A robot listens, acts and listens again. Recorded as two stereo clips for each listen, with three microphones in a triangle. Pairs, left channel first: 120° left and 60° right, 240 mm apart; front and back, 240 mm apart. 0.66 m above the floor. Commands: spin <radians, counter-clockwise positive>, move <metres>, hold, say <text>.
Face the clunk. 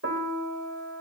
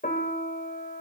hold
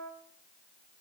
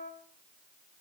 hold
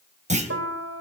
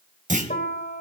spin -2.09
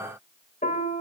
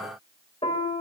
say I heard a clunk from this way, but can't make it out now.